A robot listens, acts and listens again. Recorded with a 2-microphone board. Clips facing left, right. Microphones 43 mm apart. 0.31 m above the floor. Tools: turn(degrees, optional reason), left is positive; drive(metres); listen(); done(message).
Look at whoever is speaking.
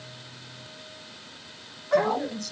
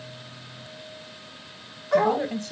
turn(degrees=-30, reason="The woman speaking: about 30° right or 150° right.")
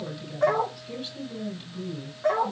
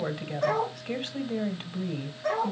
turn(degrees=-110, reason="So it is at 110° right.")
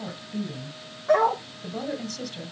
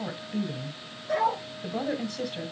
turn(degrees=-20, reason="The woman speaking is now 20° right.")
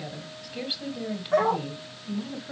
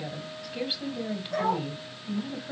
done("Facing the woman speaking.")